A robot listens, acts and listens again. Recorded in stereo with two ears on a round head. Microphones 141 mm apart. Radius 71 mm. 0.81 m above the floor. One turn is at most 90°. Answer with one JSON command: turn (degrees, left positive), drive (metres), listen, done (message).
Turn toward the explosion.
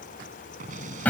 {"turn": -55}
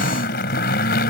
{"listen": true}
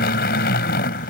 {"done": "I heard an explosion, but can't make it out now. It was about straight ahead or 70° right."}